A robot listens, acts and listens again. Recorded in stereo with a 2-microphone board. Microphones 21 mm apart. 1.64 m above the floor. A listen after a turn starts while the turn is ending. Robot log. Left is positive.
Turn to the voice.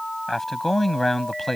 cmd yaw +30
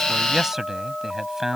note: So it is at 20° right.
cmd yaw -20
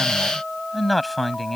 end: Facing the man speaking.